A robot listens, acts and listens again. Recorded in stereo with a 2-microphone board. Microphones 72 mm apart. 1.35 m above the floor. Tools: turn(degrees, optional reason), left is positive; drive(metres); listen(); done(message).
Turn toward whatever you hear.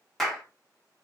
turn(degrees=30)
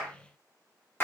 turn(degrees=150, reason="So it is at 150° left.")
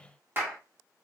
turn(degrees=-30, reason="The clap is now 30° right.")
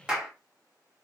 turn(degrees=-10, reason="The clap is now 10° right.")
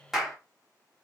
done("Found it: a clap, straight ahead, 1 to 2 m away.")